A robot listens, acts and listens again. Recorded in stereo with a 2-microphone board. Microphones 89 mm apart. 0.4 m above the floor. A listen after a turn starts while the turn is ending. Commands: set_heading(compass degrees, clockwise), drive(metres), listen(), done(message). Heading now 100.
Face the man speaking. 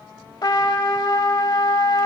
listen()
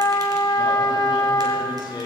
set_heading(50)
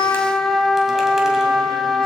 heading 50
listen()
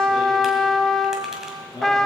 set_heading(335)
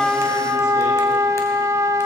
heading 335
listen()
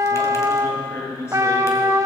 set_heading(300)
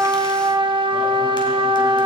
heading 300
listen()
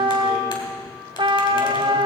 listen()
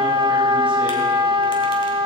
done("I heard a man speaking from this way, but can't make it out now.")